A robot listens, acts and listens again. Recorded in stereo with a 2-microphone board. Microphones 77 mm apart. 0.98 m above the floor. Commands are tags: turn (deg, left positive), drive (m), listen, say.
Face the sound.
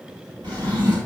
<turn deg="-90"/>
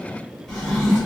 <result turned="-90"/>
<turn deg="10"/>
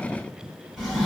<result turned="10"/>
<say>Facing the drawer, 1 to 2 m away.</say>